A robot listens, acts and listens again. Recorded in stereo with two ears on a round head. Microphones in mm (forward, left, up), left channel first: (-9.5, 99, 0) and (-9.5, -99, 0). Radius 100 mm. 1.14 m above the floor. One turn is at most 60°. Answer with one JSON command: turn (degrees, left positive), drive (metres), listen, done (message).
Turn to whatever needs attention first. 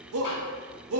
{"turn": -60}
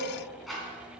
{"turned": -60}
{"listen": true}
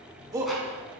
{"turn": -15}
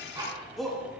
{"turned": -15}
{"done": "Facing the shout."}